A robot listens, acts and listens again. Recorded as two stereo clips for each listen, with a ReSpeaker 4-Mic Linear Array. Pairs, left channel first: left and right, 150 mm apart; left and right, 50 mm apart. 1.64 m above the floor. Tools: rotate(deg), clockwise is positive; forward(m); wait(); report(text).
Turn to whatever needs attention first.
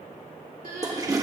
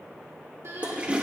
rotate(70)
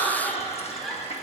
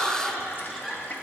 report("Found it: crying, straight ahead, 2 to 4 m away.")